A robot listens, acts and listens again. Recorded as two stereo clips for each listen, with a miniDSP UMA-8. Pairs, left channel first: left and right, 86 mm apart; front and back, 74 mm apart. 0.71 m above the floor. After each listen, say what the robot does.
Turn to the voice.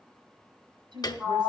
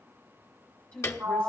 Turn 70° right.
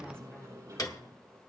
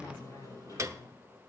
Turn 10° left.
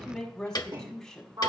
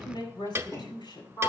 Facing the woman speaking.